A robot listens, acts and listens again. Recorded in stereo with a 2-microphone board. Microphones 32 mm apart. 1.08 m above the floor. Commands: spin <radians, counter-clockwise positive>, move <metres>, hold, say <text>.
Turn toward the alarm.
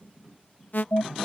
spin 1.13
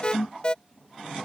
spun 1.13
spin 0.61
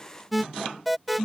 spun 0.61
say Found it: an alarm, straight ahead.